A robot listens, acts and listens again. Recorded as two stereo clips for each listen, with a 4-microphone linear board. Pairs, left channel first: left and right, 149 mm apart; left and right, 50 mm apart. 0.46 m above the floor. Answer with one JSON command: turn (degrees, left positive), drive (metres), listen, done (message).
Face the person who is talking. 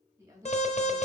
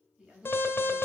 {"turn": -20}
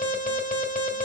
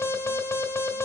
{"listen": true}
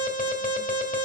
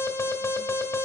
{"listen": true}
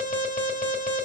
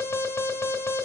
{"done": "I heard a woman speaking, but can't make it out now. It was about straight ahead or 140° right."}